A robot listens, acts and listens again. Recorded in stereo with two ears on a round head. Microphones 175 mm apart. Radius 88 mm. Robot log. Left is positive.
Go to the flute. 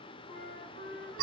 note: The flute: about 70° left or 110° left.
cmd yaw +70
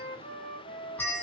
note: So it is at 40° left.
cmd yaw +40
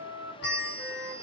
note: The flute is now 10° right.
cmd yaw -10
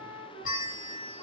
cmd fwd 1.0
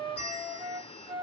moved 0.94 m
cmd fwd 1.0
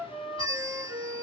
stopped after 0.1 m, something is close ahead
end: Arrived at the flute, straight ahead.